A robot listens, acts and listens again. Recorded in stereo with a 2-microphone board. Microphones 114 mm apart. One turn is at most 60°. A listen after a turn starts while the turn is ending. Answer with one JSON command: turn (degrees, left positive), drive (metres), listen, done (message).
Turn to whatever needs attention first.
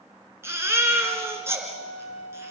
{"turn": -20}
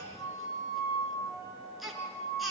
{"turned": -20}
{"done": "Found it: a baby crying, straight ahead."}